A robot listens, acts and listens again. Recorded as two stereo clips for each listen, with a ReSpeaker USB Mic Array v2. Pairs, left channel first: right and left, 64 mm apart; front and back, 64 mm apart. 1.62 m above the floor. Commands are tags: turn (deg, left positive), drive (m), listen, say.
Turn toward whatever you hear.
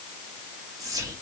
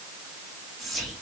<turn deg="90"/>
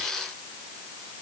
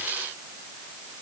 <listen/>
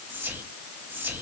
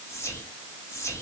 <turn deg="35"/>
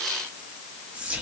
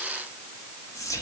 <turn deg="20"/>
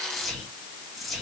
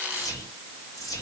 <say>Found it: whispering, straight ahead, 2 to 4 m away.</say>